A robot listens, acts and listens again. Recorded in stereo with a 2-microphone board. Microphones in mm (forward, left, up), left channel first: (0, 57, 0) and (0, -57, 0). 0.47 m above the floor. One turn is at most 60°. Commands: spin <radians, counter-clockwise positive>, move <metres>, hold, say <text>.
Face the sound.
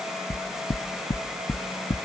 spin 1.05
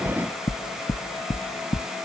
spin 0.96
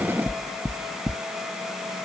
spin -0.26
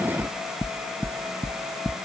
say Found it: knocking, straight ahead.